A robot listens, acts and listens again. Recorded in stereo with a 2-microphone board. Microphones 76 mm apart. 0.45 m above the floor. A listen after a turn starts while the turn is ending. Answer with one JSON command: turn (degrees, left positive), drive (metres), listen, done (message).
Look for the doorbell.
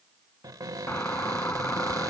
{"turn": 30}
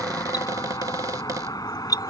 {"turn": 120}
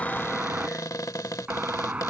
{"turn": -20}
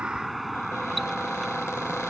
{"done": "Facing the doorbell."}